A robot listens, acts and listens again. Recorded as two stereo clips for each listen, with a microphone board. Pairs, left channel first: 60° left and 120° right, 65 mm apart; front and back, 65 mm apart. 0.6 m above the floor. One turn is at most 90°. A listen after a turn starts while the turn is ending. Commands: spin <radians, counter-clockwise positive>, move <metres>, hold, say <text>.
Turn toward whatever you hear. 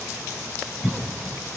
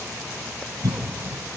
spin 1.57
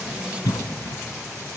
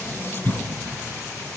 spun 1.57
spin 0.87
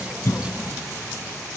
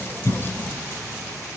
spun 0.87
hold
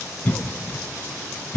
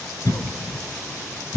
say Facing the cough.